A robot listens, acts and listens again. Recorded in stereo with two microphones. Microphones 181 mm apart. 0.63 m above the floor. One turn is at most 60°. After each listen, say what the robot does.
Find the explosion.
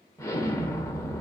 Turn 15° left.
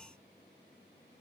Keep listening.
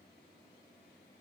I heard an explosion, but can't make it out now. It was about straight ahead or 150° left.